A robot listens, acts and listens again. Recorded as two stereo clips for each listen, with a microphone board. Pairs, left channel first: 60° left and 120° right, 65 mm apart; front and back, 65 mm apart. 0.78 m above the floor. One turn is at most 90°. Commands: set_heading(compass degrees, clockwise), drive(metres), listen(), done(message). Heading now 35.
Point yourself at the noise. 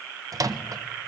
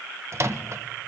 set_heading(125)
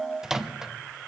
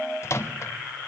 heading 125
set_heading(165)
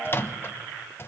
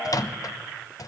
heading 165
set_heading(155)
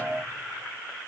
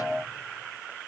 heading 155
listen()
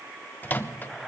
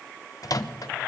done("Found it: a microwave, straight ahead.")